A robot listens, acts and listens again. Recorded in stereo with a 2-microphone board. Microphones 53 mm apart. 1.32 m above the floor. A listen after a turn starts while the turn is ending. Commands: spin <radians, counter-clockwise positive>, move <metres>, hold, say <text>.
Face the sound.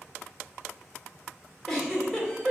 spin 0.52
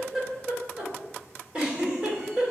spin -0.35
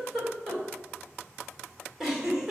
spin -0.17
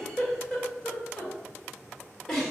say Facing the giggle.